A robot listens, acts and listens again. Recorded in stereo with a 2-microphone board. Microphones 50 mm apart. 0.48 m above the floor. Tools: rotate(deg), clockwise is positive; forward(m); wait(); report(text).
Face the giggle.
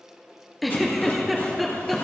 rotate(-30)
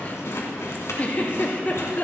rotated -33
rotate(-145)
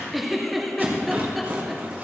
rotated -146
report("Facing the giggle.")